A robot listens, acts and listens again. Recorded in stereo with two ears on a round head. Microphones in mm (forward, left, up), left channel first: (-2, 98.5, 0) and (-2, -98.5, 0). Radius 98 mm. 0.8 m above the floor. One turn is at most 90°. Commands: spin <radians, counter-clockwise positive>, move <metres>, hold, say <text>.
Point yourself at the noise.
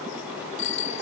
spin 1.05
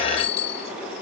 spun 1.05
spin 0.96
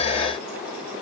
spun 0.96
hold
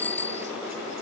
spin 0.17
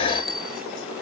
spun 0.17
say Facing the bicycle bell.